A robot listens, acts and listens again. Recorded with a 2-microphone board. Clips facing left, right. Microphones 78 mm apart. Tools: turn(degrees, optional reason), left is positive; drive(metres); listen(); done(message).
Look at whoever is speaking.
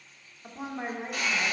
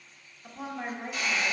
turn(degrees=15, reason="The woman speaking: about 15° left or 165° left.")
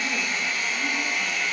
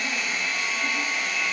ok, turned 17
listen()
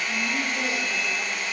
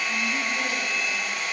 listen()
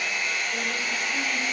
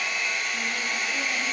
done("I heard a woman speaking, but can't make it out now. It was about straight ahead or 150° left.")